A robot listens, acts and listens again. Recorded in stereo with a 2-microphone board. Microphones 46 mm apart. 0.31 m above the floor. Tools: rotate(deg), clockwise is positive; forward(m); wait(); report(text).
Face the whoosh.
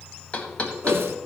rotate(70)
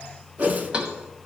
rotate(40)
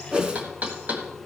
rotate(20)
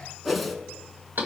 report("Facing the whoosh.")